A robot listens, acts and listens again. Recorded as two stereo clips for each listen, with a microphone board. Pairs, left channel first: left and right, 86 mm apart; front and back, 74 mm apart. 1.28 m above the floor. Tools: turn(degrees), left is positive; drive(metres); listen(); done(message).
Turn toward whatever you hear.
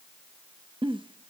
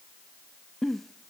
turn(degrees=-90)
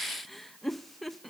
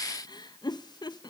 done("Found it: a giggle, straight ahead.")